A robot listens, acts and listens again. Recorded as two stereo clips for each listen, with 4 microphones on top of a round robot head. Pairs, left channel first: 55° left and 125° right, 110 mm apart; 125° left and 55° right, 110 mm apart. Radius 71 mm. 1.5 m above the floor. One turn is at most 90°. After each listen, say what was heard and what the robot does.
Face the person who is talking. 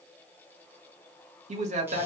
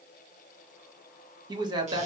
The man speaking: 110° right. Turn 90° right.
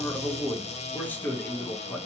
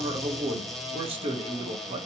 The man speaking is now 20° right. Turn 20° right.
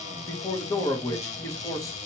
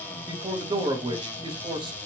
Facing the man speaking, 1 to 2 m away.